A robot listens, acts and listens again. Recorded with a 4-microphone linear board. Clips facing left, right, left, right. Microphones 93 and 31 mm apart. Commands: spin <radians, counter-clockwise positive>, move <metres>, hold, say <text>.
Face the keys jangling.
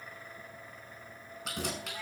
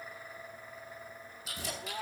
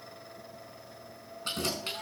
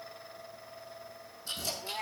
spin 1.13
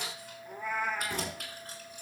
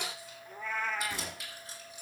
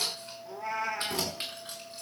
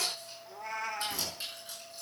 spin 0.87
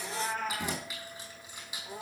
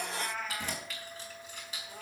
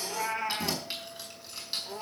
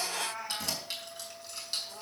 spin 0.26
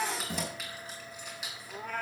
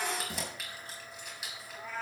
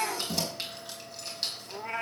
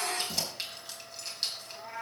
say Found it: keys jangling, straight ahead.